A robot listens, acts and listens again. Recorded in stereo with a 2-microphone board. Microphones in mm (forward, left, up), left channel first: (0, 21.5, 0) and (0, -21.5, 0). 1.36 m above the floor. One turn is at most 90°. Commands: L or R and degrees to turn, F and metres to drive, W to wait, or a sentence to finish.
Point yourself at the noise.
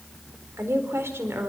R75
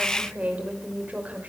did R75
R30
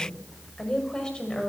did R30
L20
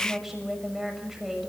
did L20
Facing the woman speaking.